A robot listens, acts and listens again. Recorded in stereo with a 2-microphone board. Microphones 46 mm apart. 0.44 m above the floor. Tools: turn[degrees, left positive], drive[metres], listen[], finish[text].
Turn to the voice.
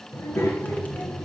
Action: turn[90]
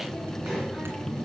Action: finish[Facing the child speaking, over 4 m away.]